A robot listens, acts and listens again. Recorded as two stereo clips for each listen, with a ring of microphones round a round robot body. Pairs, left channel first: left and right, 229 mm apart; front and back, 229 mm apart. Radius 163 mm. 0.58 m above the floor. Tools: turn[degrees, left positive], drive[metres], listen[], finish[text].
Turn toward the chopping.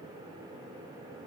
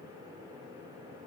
Action: listen[]
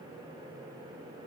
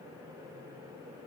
Action: listen[]
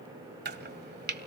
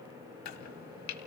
Thought: The chopping: 45° right.
Action: turn[-45]
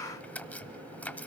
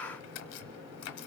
Action: finish[Found it: chopping, straight ahead, 1 to 2 m away.]